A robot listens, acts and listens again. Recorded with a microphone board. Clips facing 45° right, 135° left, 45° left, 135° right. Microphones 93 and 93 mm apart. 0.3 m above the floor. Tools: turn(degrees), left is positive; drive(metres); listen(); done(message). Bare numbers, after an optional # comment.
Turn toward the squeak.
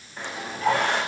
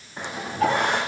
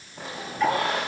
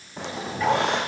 # The squeak: 150° right.
turn(-150)
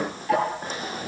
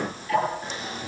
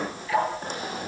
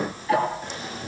done("Found it: a squeak, straight ahead.")